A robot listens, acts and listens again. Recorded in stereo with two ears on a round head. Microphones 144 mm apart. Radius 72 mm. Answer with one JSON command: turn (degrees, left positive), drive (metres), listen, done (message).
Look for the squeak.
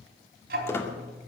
{"turn": 15}
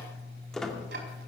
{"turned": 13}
{"done": "Found it: a squeak, straight ahead."}